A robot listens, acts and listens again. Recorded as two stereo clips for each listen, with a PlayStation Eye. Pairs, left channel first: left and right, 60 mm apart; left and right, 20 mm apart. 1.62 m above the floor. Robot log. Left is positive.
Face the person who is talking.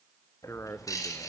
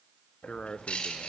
note: The man speaking: about 50° left or 130° left.
cmd yaw +50
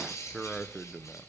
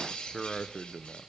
end: Facing the man speaking, 1 to 2 m away.